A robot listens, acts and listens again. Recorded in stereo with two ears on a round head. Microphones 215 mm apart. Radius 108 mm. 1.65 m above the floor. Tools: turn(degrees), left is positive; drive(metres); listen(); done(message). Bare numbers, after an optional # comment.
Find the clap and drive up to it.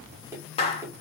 # The clap: about 25° left or 155° left.
turn(25)
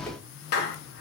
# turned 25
# So it is at 130° left.
turn(130)
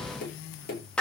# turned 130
drive(1.0)
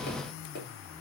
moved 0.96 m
listen()
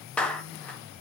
drive(1.0)
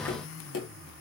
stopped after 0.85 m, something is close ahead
listen()
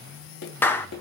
# The clap is now 10° left.
turn(10)
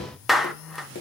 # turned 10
done("Arrived at the clap, straight ahead.")